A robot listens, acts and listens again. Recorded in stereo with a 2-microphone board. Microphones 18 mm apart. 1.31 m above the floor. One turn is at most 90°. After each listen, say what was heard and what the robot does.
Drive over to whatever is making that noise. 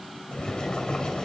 The boiling: about 50° left or 130° left. Turn 50° left.
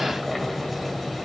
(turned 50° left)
Drive 1.0 m forward.
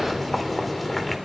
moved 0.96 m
Drive 1.0 m forward.
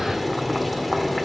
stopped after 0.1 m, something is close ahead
I am next to the boiling.